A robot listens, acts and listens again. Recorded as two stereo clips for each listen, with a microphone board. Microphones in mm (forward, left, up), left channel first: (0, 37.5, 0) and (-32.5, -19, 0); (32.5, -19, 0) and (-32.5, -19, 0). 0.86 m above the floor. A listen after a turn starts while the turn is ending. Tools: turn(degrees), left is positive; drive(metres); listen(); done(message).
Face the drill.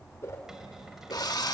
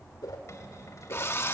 turn(degrees=50)
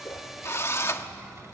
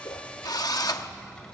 turn(degrees=10)
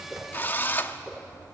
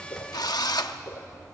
done("Facing the drill.")